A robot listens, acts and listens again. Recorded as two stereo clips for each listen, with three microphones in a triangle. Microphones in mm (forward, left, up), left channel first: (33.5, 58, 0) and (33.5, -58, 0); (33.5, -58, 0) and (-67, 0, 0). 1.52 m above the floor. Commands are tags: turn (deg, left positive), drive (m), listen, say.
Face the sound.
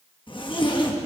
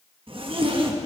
<turn deg="125"/>
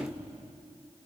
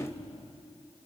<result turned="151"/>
<turn deg="-25"/>
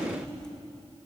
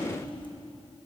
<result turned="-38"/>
<turn deg="10"/>
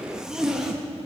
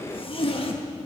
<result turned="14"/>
<say>Facing the zipper.</say>